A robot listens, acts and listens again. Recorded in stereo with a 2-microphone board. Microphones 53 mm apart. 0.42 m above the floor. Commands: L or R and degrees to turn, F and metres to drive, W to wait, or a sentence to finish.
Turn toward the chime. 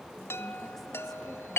L50
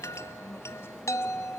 L80
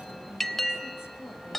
Facing the chime, under 1 m away.